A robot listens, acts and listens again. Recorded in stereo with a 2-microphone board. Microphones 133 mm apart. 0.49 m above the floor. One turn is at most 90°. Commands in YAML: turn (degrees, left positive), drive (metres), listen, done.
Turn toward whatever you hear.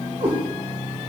turn: -45
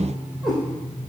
done: "Found it: a cat meowing, straight ahead, 2 to 4 m away."